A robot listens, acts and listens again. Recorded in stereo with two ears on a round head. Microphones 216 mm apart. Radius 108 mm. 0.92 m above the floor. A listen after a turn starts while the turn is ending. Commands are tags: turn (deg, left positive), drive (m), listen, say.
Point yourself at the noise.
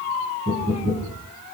<turn deg="-40"/>
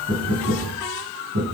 <turn deg="-100"/>
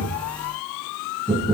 <turn deg="10"/>
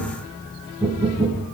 <say>Facing the knocking.</say>